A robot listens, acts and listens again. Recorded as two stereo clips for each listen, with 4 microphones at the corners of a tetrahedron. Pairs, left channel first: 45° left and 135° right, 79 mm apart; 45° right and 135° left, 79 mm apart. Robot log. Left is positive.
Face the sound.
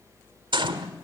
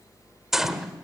note: The gunshot: 140° right.
cmd yaw -140
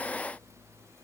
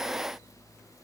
end: I heard a gunshot from this way, but can't make it out now.